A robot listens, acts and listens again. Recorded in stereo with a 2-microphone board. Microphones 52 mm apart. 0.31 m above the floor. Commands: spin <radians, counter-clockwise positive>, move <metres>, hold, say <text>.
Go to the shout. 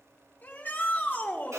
spin 0.61
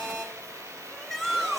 move 1.0
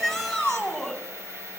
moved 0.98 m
move 1.0
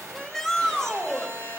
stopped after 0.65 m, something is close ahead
spin 0.17
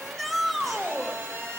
say I am next to the shout.